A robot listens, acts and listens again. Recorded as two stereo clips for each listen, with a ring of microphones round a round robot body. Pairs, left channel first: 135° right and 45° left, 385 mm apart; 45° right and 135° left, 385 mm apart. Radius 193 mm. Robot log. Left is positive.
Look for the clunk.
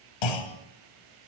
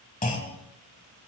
note: The clunk: 115° right.
cmd yaw -115
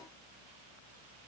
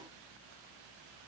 end: Facing where the clunk came from. I can't hear it now.